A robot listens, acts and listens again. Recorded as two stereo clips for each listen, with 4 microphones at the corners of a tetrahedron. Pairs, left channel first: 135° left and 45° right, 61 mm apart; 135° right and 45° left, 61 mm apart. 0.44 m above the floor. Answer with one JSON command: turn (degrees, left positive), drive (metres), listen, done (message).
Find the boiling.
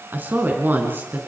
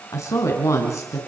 {"listen": true}
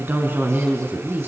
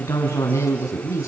{"listen": true}
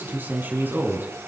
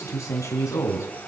{"done": "I can't make out boiling, only a woman speaking."}